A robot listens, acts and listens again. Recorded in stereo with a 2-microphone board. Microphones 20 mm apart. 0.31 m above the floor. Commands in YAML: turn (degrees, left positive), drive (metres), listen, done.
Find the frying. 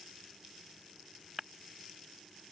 listen: true
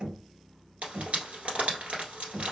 turn: -75
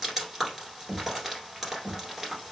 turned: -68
done: "Found it: frying, straight ahead."